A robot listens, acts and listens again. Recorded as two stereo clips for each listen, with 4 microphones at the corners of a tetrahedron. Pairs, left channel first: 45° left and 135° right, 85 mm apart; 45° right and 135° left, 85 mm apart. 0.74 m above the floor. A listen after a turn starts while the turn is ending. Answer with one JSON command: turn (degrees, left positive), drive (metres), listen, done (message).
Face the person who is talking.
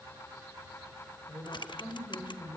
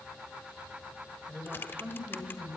{"turn": 60}
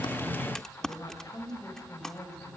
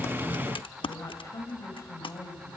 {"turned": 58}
{"done": "Facing the woman speaking."}